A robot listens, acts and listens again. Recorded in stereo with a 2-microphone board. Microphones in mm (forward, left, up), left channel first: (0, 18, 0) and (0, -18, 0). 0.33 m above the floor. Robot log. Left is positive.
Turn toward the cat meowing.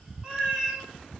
note: The cat meowing: about 20° right or 160° right.
cmd yaw -20
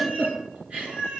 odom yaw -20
note: The cat meowing: about 30° right or 150° right.
cmd yaw -30
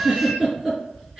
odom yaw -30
note: So it is at 135° right.
cmd yaw -135
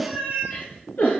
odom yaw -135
note: The cat meowing is now 50° right.
cmd yaw -50
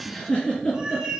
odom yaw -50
note: The cat meowing is now 15° right.
cmd yaw -15
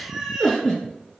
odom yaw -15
end: Facing the cat meowing.